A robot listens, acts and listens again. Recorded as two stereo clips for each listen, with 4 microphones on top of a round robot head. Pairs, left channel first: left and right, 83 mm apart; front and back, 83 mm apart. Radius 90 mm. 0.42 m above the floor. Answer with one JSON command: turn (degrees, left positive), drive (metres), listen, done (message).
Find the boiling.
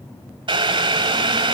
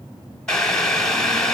{"turn": -85}
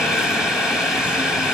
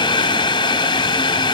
{"done": "Found it: boiling, straight ahead, 1 to 2 m away."}